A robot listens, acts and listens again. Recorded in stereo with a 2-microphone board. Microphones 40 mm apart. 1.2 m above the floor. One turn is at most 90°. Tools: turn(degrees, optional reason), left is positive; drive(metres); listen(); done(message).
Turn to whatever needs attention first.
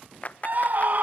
turn(degrees=-45, reason="The scream: about 45° right or 135° right.")
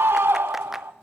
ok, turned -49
turn(degrees=-85, reason="So it is at 85° right.")
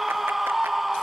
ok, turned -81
done("Facing the scream.")